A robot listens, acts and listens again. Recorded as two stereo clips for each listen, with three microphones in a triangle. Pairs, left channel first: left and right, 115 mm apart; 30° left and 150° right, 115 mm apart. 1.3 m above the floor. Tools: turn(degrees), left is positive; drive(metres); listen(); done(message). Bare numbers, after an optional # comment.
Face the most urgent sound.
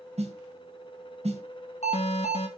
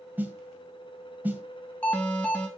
# The alarm: 110° left.
turn(110)
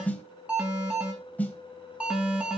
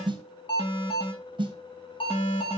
# The alarm is now 10° right.
turn(-10)
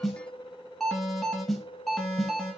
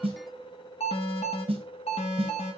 done("Found it: an alarm, straight ahead.")